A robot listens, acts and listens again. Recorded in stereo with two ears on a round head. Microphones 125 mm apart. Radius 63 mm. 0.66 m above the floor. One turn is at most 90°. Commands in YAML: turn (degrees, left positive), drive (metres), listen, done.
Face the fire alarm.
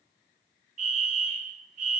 turn: -60
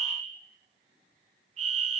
turn: -55
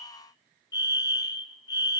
turn: 30
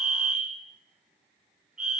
done: "Found it: a fire alarm, straight ahead, 2 to 4 m away."